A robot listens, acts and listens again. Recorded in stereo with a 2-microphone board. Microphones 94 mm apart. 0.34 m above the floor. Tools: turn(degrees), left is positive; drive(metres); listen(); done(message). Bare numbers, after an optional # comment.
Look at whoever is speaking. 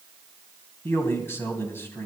# The man speaking: about 25° left or 155° left.
turn(25)
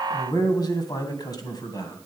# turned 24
# So it is at 130° left.
turn(130)
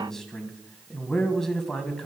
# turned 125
done("Found it: a man speaking, straight ahead, 2 to 4 m away.")